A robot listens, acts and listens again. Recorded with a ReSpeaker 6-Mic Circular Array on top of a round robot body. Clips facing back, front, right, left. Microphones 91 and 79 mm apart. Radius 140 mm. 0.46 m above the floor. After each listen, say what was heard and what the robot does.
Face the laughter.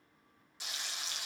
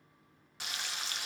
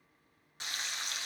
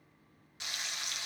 Keep listening.
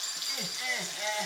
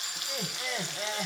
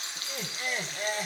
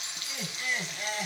The laughter: 45° right. Turn 45° right.
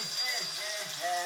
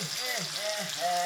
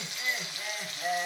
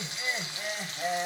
The laughter is now 35° left. Turn 35° left.
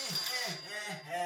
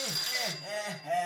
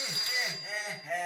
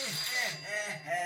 Facing the laughter.